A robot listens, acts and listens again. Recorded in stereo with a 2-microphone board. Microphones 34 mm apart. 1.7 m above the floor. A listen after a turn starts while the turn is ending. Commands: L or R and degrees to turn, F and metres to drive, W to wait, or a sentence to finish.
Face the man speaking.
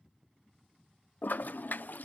W
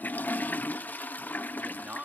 R45
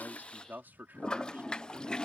R85
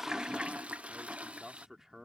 R15
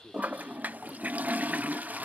W
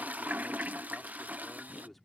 Found it: a man speaking, straight ahead.